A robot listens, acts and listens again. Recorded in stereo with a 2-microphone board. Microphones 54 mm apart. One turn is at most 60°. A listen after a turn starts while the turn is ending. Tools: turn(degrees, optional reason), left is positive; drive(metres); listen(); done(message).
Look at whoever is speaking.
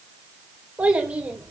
turn(degrees=-20, reason="The child speaking: about 20° right or 160° right.")
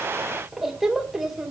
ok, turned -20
done("Facing the child speaking, 2 to 4 m away.")